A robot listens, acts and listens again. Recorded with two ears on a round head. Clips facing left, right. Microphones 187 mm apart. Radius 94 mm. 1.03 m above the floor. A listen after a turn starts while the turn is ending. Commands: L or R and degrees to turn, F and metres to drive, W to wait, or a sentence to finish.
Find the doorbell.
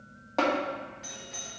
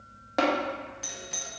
R60
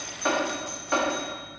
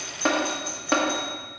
R25
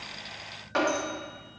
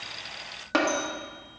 W
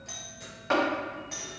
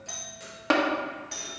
Facing the doorbell, 1 to 2 m away.